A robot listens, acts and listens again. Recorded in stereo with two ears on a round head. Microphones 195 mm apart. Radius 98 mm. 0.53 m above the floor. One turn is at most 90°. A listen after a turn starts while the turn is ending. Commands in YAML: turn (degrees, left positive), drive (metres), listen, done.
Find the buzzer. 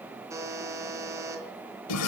turn: -30
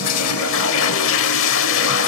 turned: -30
listen: true
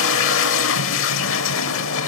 listen: true
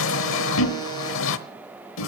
done: "I heard a buzzer, but can't make it out now. It was about 15° left or 135° right."